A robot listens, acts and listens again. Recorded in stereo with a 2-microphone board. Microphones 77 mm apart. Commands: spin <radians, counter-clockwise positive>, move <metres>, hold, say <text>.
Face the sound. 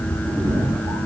spin -1.05
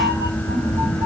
spin -1.05
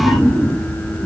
spin -0.35
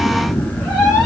say Found it: a cat meowing, straight ahead.